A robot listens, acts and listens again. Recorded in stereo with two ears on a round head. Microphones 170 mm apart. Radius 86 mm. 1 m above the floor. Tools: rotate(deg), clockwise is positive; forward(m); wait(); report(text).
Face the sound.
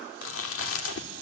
rotate(-90)
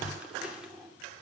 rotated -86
report("Facing the chewing, 2 to 4 m away.")